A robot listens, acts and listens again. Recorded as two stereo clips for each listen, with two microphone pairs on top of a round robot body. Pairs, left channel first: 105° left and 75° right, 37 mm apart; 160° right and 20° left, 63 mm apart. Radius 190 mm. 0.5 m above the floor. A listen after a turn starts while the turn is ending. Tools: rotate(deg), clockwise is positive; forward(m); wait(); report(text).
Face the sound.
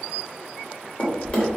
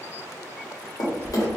rotate(-165)
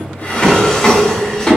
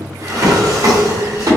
rotate(-35)
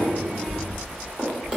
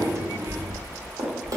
report("Facing the drawer, 1 to 2 m away.")